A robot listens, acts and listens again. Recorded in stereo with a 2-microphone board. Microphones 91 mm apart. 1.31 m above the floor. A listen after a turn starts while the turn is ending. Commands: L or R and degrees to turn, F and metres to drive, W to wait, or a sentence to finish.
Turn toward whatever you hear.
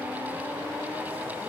W
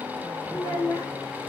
L45
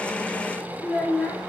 Found it: a child speaking, straight ahead.